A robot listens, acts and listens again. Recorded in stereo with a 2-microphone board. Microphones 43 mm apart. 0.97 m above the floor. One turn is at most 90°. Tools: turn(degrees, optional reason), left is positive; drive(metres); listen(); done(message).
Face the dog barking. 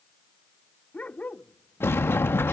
turn(degrees=35, reason="The dog barking: about 35° left or 145° left.")
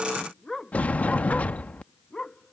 turn(degrees=15, reason="So it is at 15° left.")
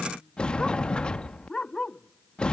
turn(degrees=15, reason="The dog barking is now 15° left.")
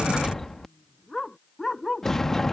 done("Facing the dog barking.")